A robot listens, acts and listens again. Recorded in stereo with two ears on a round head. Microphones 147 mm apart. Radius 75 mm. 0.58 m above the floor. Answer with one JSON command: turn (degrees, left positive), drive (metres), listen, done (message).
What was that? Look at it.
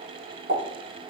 {"turn": -70}
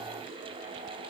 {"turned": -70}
{"listen": true}
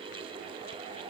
{"done": "I heard a pop, but can't make it out now. It was about straight ahead or 40° right."}